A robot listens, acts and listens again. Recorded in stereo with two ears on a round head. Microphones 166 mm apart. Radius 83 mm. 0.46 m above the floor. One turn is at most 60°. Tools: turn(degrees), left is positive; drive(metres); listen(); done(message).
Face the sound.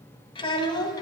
turn(degrees=20)
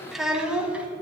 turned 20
turn(degrees=-10)
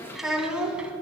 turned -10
done("Facing the child speaking, 2 to 4 m away.")